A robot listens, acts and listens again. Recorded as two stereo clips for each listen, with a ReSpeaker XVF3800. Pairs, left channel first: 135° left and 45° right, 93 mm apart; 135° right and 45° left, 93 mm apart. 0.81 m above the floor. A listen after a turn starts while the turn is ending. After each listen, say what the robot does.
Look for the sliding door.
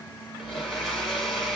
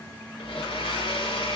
Keep listening.
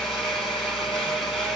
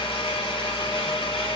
Keep listening.
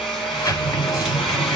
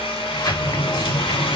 Turn 175° right.
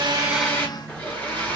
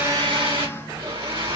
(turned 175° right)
Keep listening.
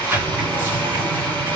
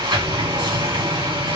Turn 25° left.
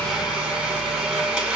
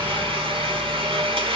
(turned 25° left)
Keep listening.
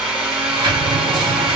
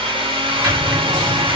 Facing the sliding door, 2 to 4 m away.